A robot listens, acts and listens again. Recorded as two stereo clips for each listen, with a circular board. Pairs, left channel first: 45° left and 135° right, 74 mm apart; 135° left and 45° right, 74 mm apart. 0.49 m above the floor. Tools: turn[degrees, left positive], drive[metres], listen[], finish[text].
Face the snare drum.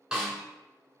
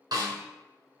Thought: The snare drum: 55° right.
Action: turn[-55]
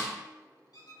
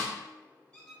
Thought: The snare drum is now 25° right.
Action: turn[-25]
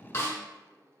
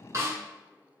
Action: finish[Facing the snare drum.]